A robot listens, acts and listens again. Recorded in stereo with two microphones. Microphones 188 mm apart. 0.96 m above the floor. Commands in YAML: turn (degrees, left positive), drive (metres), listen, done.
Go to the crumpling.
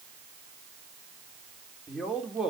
listen: true
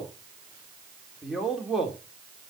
listen: true
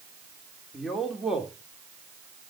done: "I can't make out crumpling to turn to."